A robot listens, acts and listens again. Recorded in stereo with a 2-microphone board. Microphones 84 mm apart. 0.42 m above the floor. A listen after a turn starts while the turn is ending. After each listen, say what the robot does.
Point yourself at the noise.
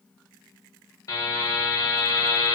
Turn 45° left.
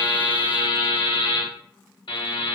Turn 85° left.
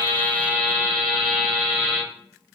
Found it: a buzzer, straight ahead.